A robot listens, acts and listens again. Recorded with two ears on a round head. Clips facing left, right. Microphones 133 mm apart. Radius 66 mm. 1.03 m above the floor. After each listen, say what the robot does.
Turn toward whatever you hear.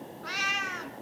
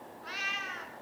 Turn 60° left.
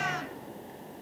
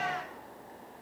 Turn 60° left.
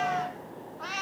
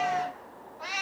Turn 10° right.
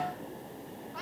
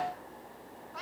Found it: a cat meowing, straight ahead.